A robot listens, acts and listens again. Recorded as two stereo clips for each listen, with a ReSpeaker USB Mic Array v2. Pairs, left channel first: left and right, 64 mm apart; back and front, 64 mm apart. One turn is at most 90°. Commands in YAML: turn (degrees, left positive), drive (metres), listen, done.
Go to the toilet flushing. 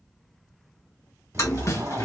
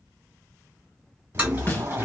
turn: 65
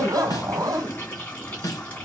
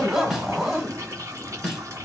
turn: 30
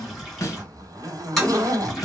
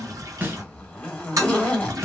drive: 1.0
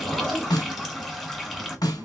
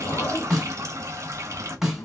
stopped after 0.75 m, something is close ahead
done: "I am next to the toilet flushing."